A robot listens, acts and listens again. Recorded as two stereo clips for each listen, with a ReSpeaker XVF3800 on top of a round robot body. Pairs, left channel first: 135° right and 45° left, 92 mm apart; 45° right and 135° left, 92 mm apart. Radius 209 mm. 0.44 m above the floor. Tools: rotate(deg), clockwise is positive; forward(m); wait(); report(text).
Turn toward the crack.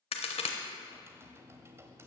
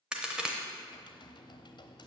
rotate(145)
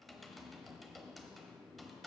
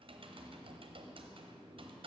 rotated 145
report("Facing where the crack came from. I can't hear it now.")